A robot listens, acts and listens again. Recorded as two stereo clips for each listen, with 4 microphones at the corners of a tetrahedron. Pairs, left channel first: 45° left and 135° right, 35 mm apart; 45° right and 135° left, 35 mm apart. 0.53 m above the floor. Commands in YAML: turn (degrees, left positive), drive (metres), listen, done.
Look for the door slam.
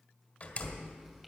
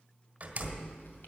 turn: 90
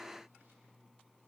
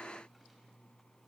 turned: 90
done: "I heard a door slam from this way, but can't make it out now."